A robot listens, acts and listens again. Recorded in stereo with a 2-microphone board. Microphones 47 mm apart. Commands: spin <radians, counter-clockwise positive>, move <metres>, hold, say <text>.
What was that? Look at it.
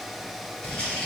spin 0.35
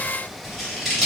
say Found it: scissors, straight ahead, 1 to 2 m away.